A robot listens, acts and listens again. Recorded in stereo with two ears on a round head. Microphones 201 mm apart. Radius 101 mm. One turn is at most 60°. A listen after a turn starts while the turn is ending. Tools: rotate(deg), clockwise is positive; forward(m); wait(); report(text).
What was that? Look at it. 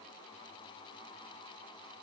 wait()
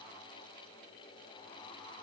wait()
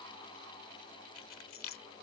rotate(-60)
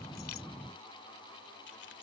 wait()
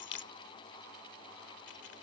rotate(-55)
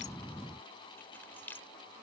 rotate(-10)
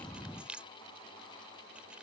report("Facing the keys jangling.")